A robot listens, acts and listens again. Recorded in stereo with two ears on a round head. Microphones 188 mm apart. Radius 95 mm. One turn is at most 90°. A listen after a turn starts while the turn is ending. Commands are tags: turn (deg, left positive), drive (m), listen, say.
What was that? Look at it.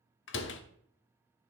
<turn deg="65"/>
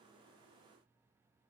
<listen/>
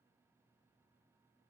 <say>I heard a door slam, but can't make it out now. It was about straight ahead or 50° left.</say>